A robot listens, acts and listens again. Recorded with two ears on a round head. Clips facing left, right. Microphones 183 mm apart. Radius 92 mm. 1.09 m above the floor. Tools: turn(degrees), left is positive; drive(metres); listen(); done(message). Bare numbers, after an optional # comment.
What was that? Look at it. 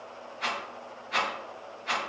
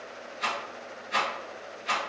# The rattle: about 20° right or 160° right.
turn(-20)
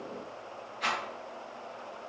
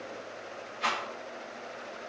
done("Found it: a rattle, straight ahead.")